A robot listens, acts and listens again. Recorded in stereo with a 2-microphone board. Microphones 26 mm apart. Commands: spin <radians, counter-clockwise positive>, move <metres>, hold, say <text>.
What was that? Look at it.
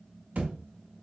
spin -1.31
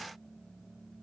hold
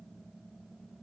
say I heard a thud, but can't make it out now. It was about straight ahead or 30° right.